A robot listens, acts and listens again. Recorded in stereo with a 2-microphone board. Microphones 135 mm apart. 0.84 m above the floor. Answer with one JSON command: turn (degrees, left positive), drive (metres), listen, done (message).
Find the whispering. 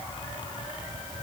{"listen": true}
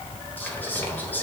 {"turn": 30}
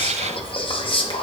{"turn": 135}
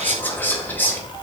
{"turn": 15}
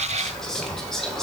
{"done": "Found it: whispering, straight ahead, under 1 m away."}